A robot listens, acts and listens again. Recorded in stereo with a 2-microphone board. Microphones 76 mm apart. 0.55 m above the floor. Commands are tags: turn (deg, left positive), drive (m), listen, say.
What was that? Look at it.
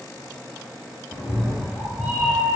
<turn deg="-20"/>
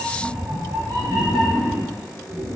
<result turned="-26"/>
<turn deg="-120"/>
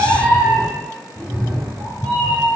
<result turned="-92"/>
<turn deg="-25"/>
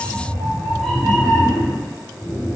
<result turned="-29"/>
<say>Found it: a cat meowing, straight ahead.</say>